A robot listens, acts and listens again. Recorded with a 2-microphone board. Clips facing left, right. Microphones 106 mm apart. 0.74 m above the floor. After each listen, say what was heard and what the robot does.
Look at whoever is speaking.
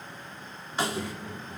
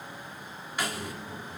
The child speaking: about 55° left or 125° left. Turn 55° left.
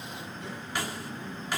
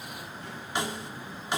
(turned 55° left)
So it is at 70° left. Turn 70° left.
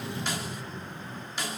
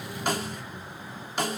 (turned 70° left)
The child speaking is now 30° left. Turn 30° left.
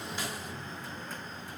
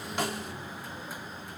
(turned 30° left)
Facing the child speaking, over 4 m away.